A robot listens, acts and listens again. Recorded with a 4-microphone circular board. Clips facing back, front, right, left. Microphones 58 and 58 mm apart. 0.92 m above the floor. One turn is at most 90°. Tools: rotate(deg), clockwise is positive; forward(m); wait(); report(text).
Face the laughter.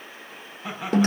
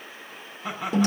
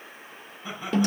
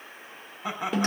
rotate(-90)
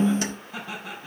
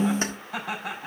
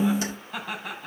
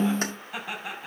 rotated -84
rotate(-10)
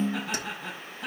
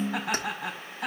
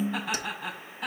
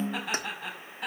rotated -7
report("Found it: laughter, straight ahead, over 4 m away.")